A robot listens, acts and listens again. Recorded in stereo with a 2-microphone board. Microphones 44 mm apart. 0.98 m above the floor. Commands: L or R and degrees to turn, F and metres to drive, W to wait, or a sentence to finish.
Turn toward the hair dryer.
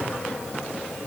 W
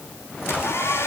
L90
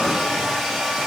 Facing the hair dryer.